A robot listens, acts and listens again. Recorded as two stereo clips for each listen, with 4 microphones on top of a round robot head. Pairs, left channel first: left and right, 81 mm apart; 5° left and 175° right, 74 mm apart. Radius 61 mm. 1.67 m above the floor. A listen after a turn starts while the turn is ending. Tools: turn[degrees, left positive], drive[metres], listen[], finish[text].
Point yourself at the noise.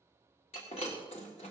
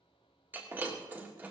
Thought: The breaking glass: 130° left.
Action: turn[130]
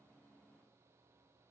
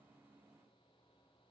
Action: finish[Facing where the breaking glass came from. I can't hear it now.]